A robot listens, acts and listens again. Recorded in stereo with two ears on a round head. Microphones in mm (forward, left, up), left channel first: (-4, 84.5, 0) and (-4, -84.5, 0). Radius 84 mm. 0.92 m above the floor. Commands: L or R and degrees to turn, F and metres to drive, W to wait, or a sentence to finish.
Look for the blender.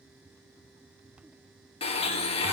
L30
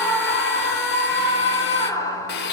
L115
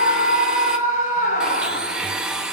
Found it: a blender, straight ahead, under 1 m away.